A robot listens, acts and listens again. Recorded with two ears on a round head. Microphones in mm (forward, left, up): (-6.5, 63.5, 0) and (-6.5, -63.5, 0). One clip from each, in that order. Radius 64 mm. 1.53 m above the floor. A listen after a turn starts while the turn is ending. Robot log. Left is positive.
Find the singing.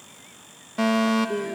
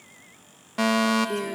cmd yaw -90
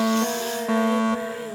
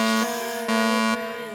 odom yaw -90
cmd idle
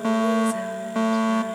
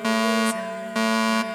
cmd idle
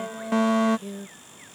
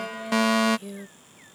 note: The singing is now 25° right.
cmd yaw -25
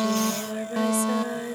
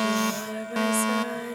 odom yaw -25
end: Found it: singing, straight ahead.